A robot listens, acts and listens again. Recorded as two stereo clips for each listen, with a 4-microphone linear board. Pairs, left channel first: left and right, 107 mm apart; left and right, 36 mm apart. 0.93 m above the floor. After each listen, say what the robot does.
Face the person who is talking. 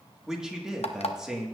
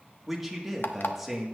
Turn 30° right.
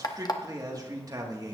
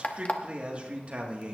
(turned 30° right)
Turn 140° right.
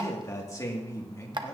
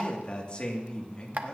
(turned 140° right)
Turn 30° left.
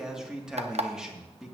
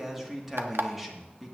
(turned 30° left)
Facing the man speaking.